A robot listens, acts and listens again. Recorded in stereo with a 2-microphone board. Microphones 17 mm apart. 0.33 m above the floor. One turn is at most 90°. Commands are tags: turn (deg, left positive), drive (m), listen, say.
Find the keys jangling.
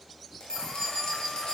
<turn deg="50"/>
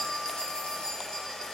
<turn deg="80"/>
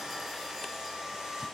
<listen/>
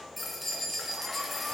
<say>Facing the keys jangling.</say>